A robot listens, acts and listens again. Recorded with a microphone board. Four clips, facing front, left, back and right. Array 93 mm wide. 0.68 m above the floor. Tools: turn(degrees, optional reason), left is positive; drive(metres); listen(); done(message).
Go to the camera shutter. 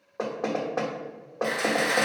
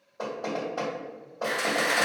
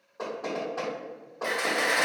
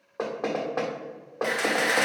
turn(degrees=-95, reason="The camera shutter: 95° right.")
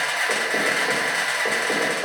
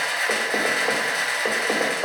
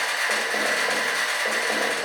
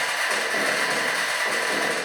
turn(degrees=35, reason="The camera shutter is now 35° left.")
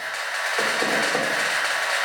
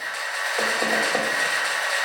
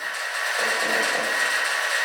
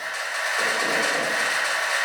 drive(metres=1.0)
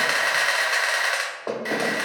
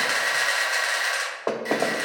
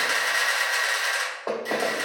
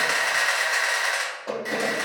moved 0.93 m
drive(metres=1.0)
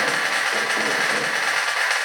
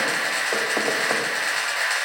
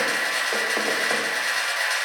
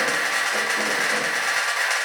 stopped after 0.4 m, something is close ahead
done("I am next to the camera shutter.")